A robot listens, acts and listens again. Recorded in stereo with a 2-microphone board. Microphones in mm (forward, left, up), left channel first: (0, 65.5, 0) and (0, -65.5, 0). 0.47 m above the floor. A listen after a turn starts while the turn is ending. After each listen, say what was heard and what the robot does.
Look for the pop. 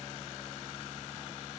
Keep listening.
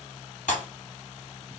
Turn 90° left.
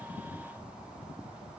I heard a pop from this way, but can't make it out now.